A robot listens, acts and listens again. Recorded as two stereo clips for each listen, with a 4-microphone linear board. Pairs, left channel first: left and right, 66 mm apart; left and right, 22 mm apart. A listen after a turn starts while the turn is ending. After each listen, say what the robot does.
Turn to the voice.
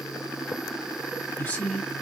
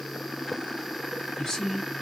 Turn 25° left.
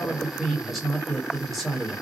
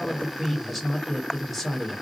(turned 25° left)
Found it: a woman speaking, straight ahead.